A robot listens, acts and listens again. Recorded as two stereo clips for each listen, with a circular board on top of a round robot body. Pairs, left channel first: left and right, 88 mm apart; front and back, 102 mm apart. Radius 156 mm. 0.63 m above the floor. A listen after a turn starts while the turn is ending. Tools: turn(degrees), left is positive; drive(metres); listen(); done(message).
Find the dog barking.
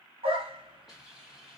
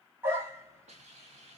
turn(degrees=-110)
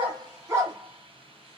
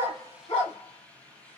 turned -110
turn(degrees=-30)
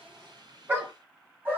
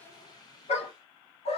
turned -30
turn(degrees=-20)
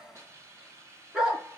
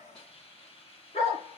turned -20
turn(degrees=-10)
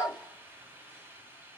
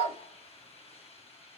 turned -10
done("Found it: a dog barking, straight ahead, 2 to 4 m away.")